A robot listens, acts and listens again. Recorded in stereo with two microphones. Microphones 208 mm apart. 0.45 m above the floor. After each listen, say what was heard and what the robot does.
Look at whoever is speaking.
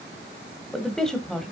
Turn 30° left.
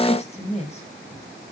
So it is at 145° left. Turn 145° left.
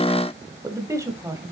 The woman speaking is now 15° right. Turn 15° right.
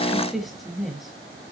Facing the woman speaking, 2 to 4 m away.